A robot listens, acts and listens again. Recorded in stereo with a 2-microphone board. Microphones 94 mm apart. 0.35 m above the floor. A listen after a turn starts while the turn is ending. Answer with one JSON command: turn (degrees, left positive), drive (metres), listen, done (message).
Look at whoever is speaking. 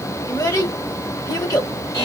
{"turn": 45}
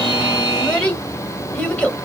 {"turn": 15}
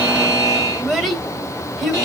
{"done": "Facing the child speaking."}